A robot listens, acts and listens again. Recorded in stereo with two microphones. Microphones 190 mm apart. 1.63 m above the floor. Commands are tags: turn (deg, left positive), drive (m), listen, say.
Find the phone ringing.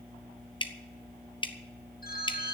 <turn deg="55"/>
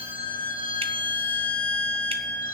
<listen/>
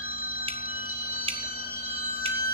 <turn deg="55"/>
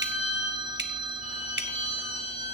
<turn deg="-25"/>
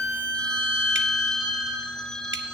<say>Facing the phone ringing, 1 to 2 m away.</say>